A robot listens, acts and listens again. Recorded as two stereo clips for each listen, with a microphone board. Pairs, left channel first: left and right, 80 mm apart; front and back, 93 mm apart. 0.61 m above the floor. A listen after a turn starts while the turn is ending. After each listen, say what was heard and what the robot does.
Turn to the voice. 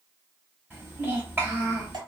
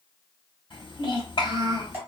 The child speaking: 25° right. Turn 25° right.
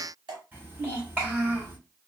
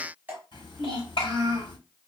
The child speaking is now 20° right. Turn 20° right.
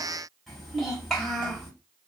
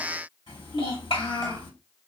Found it: a child speaking, straight ahead.